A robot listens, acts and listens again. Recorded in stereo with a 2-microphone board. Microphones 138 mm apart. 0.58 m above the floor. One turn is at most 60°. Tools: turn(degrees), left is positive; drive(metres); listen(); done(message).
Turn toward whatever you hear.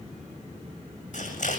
turn(degrees=60)
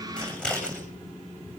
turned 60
done("Facing the scissors.")